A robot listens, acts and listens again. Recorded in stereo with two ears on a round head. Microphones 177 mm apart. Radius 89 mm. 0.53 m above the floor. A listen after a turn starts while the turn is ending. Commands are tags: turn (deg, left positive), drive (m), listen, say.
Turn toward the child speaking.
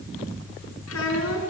<turn deg="90"/>
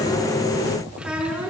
<say>Facing the child speaking.</say>